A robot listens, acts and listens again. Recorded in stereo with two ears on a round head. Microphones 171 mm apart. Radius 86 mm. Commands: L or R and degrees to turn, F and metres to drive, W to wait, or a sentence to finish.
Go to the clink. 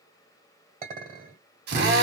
R40
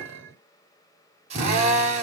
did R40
R100
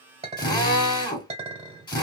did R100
R30
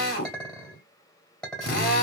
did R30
F1.0
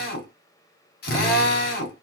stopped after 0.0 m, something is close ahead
W
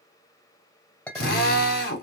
L10
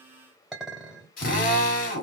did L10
Blocked. The clink is further on, straight ahead.